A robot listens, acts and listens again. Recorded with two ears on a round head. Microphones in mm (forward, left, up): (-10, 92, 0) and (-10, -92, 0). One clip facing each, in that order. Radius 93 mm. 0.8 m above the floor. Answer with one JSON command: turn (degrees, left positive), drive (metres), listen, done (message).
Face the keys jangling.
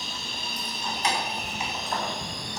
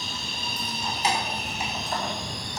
{"turn": -30}
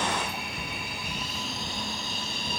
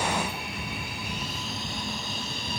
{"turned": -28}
{"listen": true}
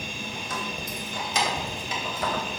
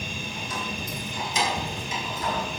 {"turn": 55}
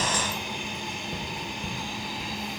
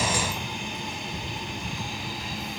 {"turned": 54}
{"listen": true}
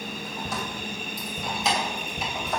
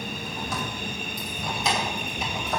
{"done": "Found it: keys jangling, straight ahead, 2 to 4 m away."}